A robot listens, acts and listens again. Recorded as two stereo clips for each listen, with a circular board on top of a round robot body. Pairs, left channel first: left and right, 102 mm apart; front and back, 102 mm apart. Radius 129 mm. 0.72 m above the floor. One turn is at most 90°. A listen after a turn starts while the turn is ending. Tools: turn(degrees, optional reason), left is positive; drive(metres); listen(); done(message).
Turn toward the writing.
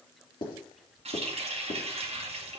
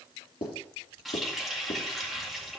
turn(degrees=40, reason="The writing: 40° left.")
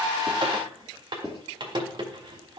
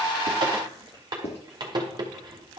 done("Facing the writing.")